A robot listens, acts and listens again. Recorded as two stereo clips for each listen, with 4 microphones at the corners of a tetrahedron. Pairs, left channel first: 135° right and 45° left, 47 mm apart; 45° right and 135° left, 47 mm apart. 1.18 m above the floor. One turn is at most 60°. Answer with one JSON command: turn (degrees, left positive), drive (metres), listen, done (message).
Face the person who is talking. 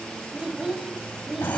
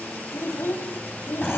{"turn": -30}
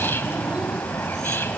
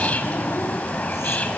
{"listen": true}
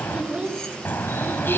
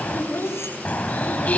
{"turn": -15}
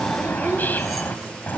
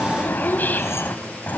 {"listen": true}
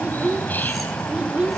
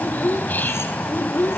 {"turn": -10}
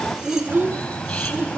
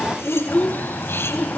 {"done": "Found it: a child speaking, straight ahead, 2 to 4 m away."}